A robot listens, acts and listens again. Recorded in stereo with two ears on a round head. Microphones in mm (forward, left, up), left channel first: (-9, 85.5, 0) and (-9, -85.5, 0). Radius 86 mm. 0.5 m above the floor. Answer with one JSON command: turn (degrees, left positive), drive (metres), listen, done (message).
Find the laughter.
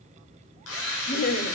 {"turn": 50}
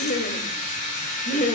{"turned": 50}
{"turn": 40}
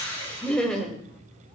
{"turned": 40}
{"done": "Facing the laughter."}